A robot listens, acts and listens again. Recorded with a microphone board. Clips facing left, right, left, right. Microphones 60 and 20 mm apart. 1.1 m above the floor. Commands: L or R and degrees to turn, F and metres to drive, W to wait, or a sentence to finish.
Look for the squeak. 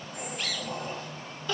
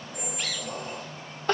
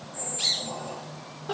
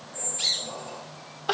L15
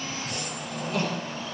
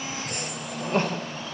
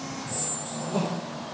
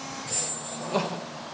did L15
Facing the squeak, over 4 m away.